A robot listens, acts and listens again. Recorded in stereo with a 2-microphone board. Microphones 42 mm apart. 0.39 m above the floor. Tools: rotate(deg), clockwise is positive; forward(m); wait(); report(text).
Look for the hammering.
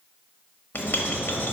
wait()
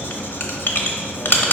wait()
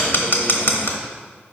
report("I can't make out hammering, only writing.")